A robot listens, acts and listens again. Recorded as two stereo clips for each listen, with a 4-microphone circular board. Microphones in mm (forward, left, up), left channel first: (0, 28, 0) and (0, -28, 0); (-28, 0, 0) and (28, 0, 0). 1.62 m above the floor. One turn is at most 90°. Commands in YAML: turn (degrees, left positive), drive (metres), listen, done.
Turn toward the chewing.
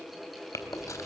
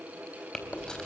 turn: 90
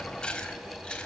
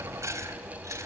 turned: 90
turn: 20
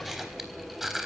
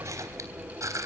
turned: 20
done: "Facing the chewing, 2 to 4 m away."